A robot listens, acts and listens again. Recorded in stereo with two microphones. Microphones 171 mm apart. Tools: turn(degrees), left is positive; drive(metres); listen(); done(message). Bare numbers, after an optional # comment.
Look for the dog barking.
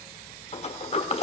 listen()
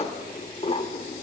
listen()
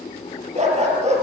# The dog barking: about 40° right or 140° right.
turn(-40)
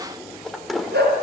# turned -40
# So it is at 105° right.
turn(-105)
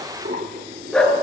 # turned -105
done("Found it: a dog barking, straight ahead.")